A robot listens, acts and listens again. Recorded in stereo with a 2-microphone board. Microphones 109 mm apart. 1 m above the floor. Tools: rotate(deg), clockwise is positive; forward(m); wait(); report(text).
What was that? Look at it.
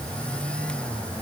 wait()
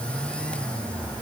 wait()
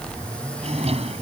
rotate(75)
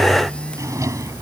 rotate(30)
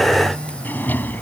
rotate(-15)
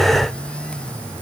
wait()
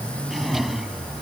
report("Facing the drawer.")